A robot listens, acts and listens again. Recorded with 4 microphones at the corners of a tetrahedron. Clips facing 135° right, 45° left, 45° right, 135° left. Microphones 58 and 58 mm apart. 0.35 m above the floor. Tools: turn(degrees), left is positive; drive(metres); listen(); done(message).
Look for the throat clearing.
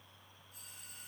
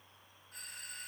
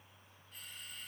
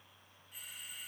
listen()
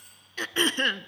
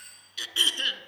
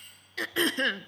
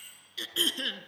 turn(degrees=-85)
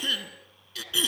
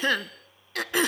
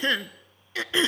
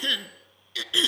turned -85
turn(degrees=10)
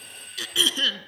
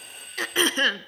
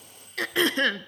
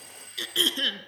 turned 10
done("Found it: throat clearing, straight ahead, 1 to 2 m away.")